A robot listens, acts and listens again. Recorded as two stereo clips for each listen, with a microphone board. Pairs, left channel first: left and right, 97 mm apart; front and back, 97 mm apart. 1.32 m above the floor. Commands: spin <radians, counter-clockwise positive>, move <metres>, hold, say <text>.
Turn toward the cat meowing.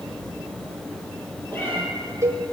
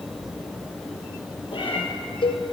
spin 0.44
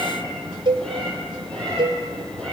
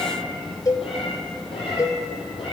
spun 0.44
spin 0.17
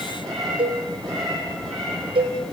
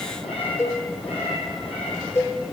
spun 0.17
say Facing the cat meowing.